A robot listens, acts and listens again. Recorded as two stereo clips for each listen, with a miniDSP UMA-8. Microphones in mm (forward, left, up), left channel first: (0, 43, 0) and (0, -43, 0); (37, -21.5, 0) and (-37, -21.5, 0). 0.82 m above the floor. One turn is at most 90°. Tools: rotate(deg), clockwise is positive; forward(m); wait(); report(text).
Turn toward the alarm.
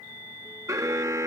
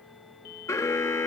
rotate(45)
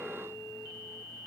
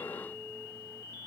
report("Found it: an alarm, straight ahead.")